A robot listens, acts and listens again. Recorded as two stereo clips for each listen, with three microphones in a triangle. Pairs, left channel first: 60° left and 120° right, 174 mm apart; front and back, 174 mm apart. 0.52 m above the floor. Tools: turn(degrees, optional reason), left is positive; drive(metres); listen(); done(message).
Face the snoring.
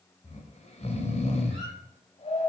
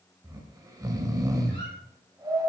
turn(degrees=110, reason="The snoring: 110° left.")
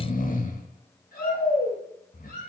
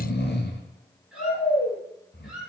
turn(degrees=20, reason="The snoring is now 20° left.")
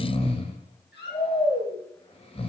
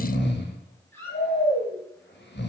done("Found it: snoring, straight ahead, 1 to 2 m away.")